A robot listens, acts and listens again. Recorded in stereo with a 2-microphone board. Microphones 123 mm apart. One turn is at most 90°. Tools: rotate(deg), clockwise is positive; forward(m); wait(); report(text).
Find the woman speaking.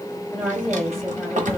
rotate(-30)
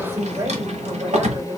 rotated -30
rotate(25)
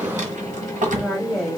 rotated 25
report("Found it: a woman speaking, straight ahead, 2 to 4 m away.")